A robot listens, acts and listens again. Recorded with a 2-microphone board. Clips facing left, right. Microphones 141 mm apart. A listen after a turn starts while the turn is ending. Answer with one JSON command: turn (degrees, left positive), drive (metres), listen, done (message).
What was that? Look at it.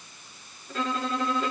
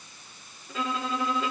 {"turn": 30}
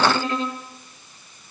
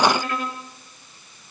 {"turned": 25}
{"turn": 155}
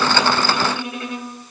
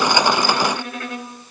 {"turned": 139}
{"turn": 20}
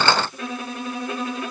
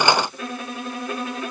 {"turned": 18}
{"done": "Facing the violin."}